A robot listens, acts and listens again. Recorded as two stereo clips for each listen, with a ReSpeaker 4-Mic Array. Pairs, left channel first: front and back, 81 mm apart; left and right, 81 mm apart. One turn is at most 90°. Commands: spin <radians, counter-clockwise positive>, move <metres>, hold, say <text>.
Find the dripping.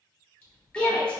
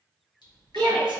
spin 1.31
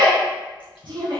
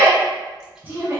hold
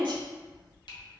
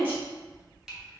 say Facing the dripping, 1 to 2 m away.